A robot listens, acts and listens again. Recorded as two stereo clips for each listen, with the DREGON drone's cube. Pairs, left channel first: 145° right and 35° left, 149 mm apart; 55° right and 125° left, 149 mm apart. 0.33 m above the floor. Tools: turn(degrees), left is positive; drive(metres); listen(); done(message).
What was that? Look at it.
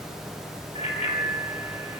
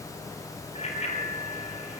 turn(degrees=-100)
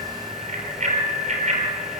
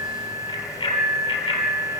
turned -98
done("Facing the bicycle bell, over 4 m away.")